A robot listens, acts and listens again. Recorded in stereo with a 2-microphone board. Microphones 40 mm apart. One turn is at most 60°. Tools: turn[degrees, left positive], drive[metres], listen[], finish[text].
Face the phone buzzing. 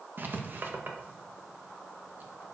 Action: listen[]
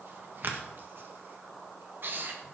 Action: listen[]
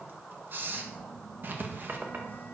Thought: The phone buzzing: about 55° left or 125° left.
Action: turn[55]
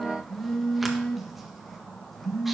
Thought: So it is at 10° left.
Action: turn[10]
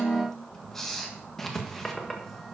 Action: finish[Facing the phone buzzing, 1 to 2 m away.]